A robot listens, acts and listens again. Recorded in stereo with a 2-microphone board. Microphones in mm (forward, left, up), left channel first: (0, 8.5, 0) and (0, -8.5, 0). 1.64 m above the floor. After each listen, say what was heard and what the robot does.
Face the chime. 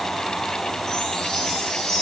The chime: about 40° left or 140° left. Turn 40° left.
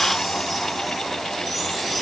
Keep listening.
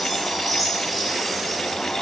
Found it: a chime, straight ahead, 2 to 4 m away.